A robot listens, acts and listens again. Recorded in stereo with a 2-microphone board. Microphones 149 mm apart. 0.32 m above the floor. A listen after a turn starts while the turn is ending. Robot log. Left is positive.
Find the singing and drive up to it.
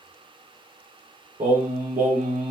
note: The singing: about 60° right or 120° right.
cmd yaw -60
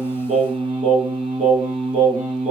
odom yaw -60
note: So it is at 50° right.
cmd yaw -50
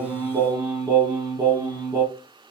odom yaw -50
note: The singing is now 25° right.
cmd yaw -25
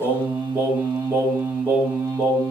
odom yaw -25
note: The singing is now 15° right.
cmd yaw -15
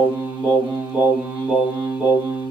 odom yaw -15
cmd fwd 1.0
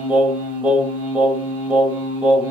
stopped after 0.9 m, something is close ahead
note: The singing is now 10° right.
cmd yaw -10
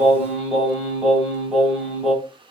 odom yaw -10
end: I am next to the singing.